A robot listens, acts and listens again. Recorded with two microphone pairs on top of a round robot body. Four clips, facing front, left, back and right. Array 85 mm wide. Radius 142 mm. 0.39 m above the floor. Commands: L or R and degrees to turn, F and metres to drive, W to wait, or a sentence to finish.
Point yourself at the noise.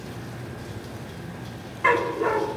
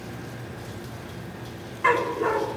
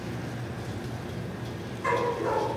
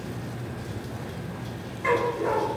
L50
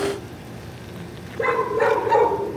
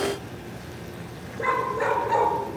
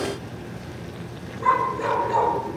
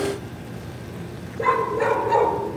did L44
L10
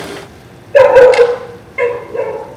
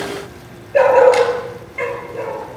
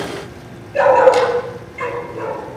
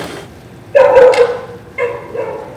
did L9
Facing the dog barking, over 4 m away.